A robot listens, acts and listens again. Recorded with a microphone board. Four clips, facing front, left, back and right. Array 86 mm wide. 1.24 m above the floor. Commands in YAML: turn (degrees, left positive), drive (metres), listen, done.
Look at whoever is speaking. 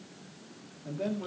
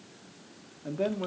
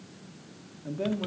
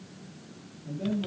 turn: 105
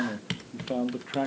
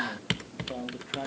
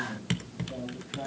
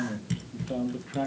turn: -10
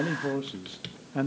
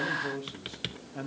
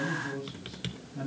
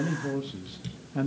turn: -20
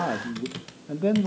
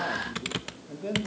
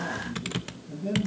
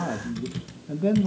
turn: -25
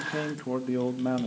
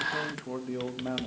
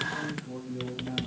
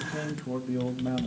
done: "Facing the man speaking, 1 to 2 m away."